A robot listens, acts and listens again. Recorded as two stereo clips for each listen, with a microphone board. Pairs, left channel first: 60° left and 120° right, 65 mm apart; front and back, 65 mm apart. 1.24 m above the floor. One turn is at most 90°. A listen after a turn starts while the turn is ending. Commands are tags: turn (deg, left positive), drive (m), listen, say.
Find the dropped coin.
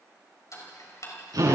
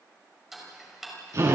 <listen/>
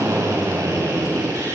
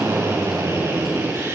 <listen/>
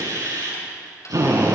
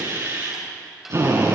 <say>I can't make out a dropped coin, only a drill and ticking.</say>